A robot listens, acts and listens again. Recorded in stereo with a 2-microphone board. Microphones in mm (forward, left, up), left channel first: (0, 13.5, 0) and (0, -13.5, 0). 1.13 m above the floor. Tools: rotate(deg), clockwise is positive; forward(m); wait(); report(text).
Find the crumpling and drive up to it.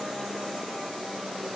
wait()
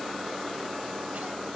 wait()
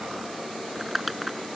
rotate(30)
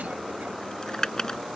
rotate(-25)
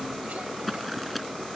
forward(1.0)
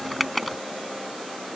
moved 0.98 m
forward(1.0)
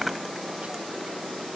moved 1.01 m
wait()
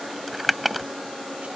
forward(1.0)
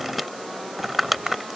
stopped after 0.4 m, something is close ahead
report("Arrived at the crumpling, straight ahead.")